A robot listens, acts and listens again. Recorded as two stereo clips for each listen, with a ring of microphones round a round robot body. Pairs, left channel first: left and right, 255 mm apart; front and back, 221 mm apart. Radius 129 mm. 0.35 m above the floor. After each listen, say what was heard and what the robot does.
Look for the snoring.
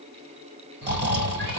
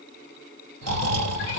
The snoring: 140° right. Turn 140° right.
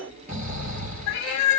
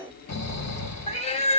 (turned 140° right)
The snoring is now 30° right. Turn 30° right.
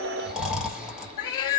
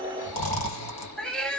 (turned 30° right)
Facing the snoring, 1 to 2 m away.